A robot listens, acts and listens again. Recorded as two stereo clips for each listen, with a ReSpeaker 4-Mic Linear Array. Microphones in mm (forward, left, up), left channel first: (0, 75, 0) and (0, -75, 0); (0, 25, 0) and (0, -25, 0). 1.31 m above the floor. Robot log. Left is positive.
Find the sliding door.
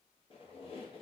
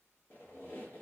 cmd idle
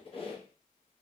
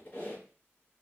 cmd idle
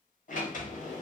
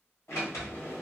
note: The sliding door: about 60° left or 120° left.
cmd yaw +60
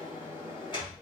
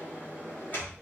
note: So it is at 35° left.
cmd yaw +35
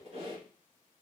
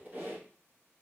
cmd idle
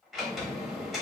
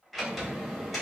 end: Facing the sliding door.